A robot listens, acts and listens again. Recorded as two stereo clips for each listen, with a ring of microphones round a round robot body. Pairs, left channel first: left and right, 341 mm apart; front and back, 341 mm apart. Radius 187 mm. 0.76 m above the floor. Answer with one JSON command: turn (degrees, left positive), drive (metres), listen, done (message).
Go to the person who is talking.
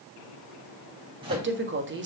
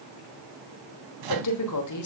{"turn": -35}
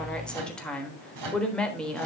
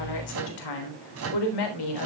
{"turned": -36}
{"drive": 1.0}
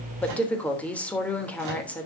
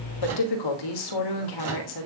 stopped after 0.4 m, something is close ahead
{"done": "Blocked. The woman speaking is further on, straight ahead."}